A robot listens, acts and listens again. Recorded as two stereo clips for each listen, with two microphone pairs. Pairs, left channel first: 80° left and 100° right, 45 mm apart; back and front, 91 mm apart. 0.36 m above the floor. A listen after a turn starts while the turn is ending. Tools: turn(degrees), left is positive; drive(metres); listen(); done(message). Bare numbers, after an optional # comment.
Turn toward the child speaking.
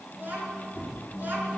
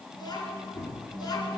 # The child speaking: 140° right.
turn(-140)
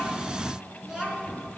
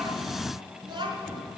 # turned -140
# The child speaking is now 25° right.
turn(-25)
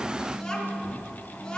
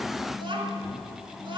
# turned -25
# The child speaking is now 10° left.
turn(10)
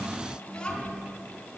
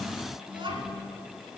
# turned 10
# The child speaking is now 15° left.
turn(15)
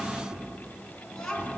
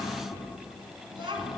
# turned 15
done("Facing the child speaking, 2 to 4 m away.")